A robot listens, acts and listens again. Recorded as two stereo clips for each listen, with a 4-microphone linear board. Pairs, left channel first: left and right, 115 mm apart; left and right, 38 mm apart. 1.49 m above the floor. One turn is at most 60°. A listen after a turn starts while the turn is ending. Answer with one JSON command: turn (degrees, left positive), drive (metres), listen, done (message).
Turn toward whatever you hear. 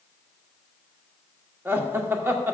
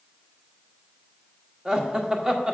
{"turn": -20}
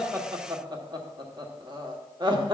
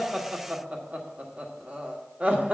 {"turn": -60}
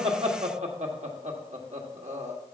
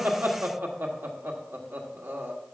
{"turn": -60}
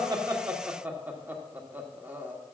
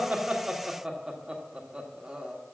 {"turn": -15}
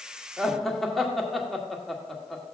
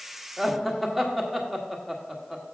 {"done": "Found it: laughter, straight ahead, 1 to 2 m away."}